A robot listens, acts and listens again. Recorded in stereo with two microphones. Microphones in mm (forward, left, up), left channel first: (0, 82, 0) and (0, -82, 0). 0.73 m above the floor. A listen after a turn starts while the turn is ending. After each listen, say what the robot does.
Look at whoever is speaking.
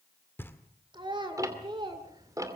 Turn 30° right.
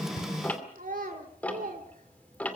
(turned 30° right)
Turn 120° right.
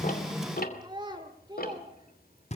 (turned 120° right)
Turn 30° right.
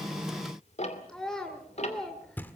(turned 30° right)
Facing the child speaking, 1 to 2 m away.